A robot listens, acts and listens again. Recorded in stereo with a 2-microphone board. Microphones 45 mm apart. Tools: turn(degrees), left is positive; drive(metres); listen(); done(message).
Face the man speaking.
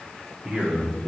turn(degrees=-30)
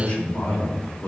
turn(degrees=40)
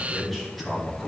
done("Facing the man speaking, 2 to 4 m away.")